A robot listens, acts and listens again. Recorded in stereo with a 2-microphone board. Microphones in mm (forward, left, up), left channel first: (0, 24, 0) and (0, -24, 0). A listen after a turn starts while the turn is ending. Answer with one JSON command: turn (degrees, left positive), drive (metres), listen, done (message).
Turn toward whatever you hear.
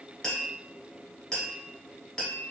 {"turn": 15}
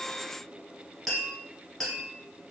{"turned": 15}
{"done": "Found it: tapping, straight ahead, 1 to 2 m away."}